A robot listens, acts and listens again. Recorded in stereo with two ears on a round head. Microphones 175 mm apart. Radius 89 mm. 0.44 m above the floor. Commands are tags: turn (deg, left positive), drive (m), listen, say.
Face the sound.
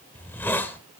<turn deg="30"/>
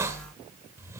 <turn deg="-15"/>
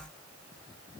<listen/>
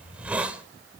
<turn deg="-10"/>
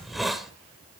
<say>Facing the hiss.</say>